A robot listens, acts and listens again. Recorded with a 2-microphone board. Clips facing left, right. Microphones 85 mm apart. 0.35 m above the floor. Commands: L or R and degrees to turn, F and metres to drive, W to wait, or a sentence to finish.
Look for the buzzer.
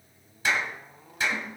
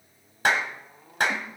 W
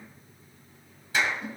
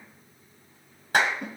W
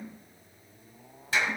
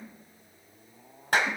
I can't make out a buzzer, only a clap and a snare drum.